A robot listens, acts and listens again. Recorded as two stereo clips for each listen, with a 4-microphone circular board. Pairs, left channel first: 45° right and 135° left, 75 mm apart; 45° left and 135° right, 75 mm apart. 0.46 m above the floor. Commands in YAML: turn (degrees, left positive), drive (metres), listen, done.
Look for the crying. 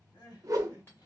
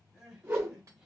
turn: -50
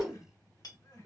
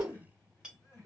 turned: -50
turn: -10
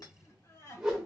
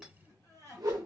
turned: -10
done: "Found it: crying, straight ahead, 1 to 2 m away."